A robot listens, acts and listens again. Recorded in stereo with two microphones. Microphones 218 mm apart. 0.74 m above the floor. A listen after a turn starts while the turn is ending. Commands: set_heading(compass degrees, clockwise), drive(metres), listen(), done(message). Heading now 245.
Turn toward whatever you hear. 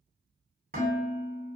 set_heading(285)
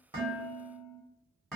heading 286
done("Facing the dishes clattering.")